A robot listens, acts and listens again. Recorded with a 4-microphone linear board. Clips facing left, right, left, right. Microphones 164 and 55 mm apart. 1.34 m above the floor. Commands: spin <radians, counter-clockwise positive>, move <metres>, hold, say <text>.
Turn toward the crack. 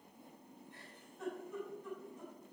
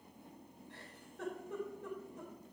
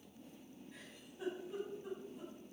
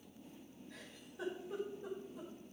hold
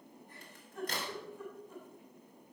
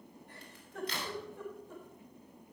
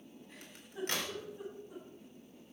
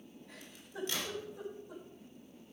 spin 0.79
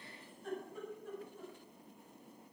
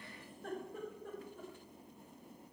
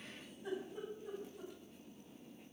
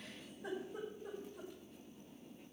hold
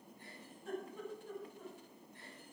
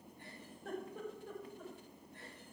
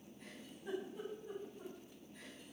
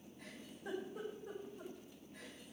say I heard a crack, but can't make it out now. It was about straight ahead or 90° left.